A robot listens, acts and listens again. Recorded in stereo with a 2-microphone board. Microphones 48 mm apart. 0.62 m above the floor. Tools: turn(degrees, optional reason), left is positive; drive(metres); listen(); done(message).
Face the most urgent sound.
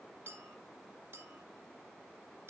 listen()
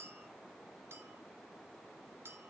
listen()
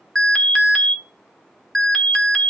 turn(degrees=30)
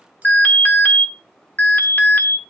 turn(degrees=145, reason="So it is at 145° left.")
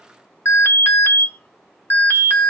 turn(degrees=70, reason="The alarm is now 70° left.")
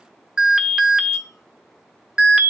turn(degrees=-15, reason="The alarm is now 15° right.")
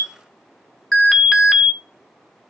done("Found it: an alarm, straight ahead, 1 to 2 m away.")